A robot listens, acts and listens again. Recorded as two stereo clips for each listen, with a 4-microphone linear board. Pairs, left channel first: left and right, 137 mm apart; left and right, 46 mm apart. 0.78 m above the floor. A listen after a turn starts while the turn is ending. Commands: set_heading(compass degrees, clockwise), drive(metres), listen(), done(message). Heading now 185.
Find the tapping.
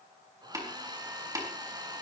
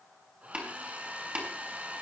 set_heading(210)
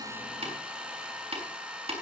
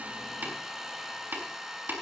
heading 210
set_heading(340)
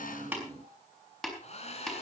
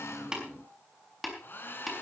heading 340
done("Facing the tapping.")